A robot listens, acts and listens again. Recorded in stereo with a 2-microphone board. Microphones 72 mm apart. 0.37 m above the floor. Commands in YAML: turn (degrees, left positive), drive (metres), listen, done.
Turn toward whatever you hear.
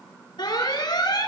turn: 75
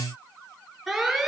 done: "Facing the alarm, over 4 m away."